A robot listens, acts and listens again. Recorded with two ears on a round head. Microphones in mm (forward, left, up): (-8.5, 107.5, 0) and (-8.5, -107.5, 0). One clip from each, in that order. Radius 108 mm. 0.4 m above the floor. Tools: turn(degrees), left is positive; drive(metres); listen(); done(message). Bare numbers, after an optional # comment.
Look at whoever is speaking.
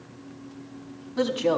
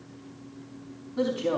# The woman speaking: about 35° left or 145° left.
turn(35)
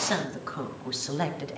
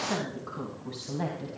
# So it is at 125° left.
turn(125)
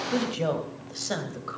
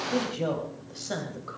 # The woman speaking is now 20° left.
turn(20)
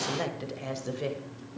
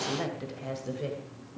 # The woman speaking is now 25° left.
turn(25)
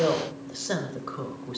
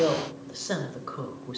done("Found it: a woman speaking, straight ahead.")